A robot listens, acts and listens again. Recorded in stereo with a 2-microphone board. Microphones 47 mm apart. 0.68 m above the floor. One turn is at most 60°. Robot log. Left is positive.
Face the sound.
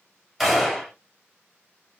cmd yaw -30
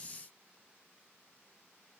cmd idle
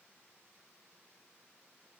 end: I heard a gunshot, but can't make it out now. It was about 25° left or 145° right.